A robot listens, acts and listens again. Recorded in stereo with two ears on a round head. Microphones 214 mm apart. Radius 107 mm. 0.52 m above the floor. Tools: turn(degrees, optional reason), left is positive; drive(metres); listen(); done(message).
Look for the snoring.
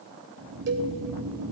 turn(degrees=-90)
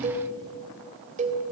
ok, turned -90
listen()
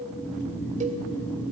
turn(degrees=10, reason="The snoring is now 10° left.")
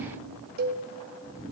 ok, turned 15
done("Facing the snoring, 2 to 4 m away.")